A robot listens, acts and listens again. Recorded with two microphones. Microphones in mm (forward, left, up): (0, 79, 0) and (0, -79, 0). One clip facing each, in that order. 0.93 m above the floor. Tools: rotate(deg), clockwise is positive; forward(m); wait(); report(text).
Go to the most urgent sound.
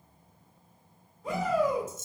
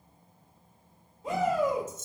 rotate(25)
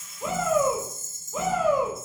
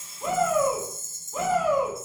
forward(1.0)
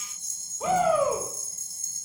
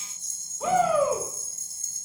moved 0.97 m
forward(1.0)
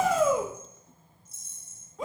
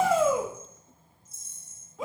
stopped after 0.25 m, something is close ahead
report("I am next to the shout.")